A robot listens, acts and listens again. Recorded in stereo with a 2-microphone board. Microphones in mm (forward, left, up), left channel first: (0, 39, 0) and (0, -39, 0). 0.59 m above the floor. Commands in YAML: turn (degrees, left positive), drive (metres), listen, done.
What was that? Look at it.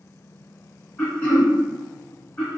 turn: 20
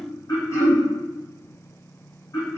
turn: 140
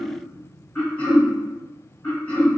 turn: 15
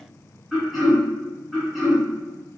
done: "Found it: throat clearing, straight ahead, 1 to 2 m away."